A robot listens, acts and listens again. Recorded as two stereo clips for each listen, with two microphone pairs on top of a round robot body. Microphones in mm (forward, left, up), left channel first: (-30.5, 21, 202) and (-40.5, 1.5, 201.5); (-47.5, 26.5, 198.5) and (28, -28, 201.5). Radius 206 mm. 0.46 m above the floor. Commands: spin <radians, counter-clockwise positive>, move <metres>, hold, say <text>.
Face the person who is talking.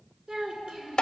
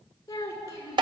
spin -2.79
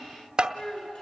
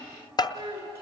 spin 0.35
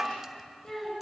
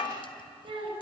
say Facing the child speaking, over 4 m away.